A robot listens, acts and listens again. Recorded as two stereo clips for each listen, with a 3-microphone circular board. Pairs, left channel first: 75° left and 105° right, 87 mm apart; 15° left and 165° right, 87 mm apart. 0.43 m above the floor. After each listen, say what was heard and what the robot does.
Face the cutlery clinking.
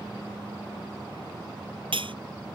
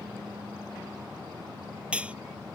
The cutlery clinking: 90° right. Turn 90° right.
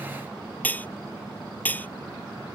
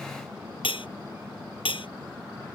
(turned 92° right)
Found it: cutlery clinking, straight ahead.